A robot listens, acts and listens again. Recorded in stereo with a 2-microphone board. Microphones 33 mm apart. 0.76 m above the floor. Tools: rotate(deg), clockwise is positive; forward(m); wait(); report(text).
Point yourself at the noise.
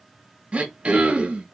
rotate(35)
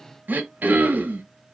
rotate(110)
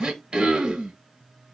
rotate(30)
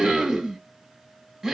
rotate(15)
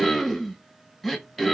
report("Found it: throat clearing, straight ahead, 1 to 2 m away.")